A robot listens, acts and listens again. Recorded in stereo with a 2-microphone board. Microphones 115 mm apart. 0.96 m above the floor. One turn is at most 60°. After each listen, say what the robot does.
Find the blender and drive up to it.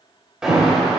Keep listening.
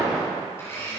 Turn 25° left.
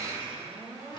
Turn 60° left.
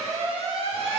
Turn 60° left.
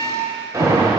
Turn 10° left.
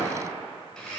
Drive 1.0 m forward.
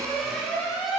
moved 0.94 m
Keep listening.
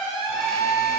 Keep listening.
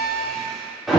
Drive 1.0 m forward.
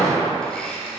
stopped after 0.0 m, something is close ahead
I am next to the blender.